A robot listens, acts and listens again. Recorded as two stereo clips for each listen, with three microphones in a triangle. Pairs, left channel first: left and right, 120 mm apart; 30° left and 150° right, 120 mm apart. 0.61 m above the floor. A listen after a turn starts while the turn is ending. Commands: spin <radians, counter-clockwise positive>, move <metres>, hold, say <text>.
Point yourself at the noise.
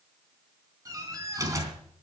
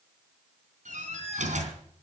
spin -2.71
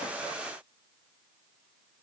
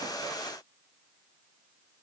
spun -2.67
say Facing where the door slam came from. I can't hear it now.